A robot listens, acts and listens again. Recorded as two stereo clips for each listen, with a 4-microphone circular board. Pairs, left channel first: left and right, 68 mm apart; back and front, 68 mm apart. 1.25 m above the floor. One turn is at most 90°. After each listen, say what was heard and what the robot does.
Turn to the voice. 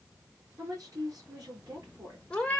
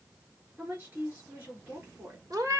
The woman speaking: 60° right. Turn 60° right.
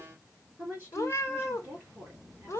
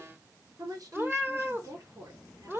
The woman speaking is now 25° right. Turn 25° right.
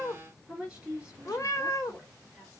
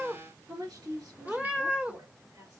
The woman speaking is now 15° right. Turn 15° right.
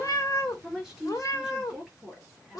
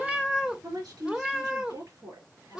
Facing the woman speaking.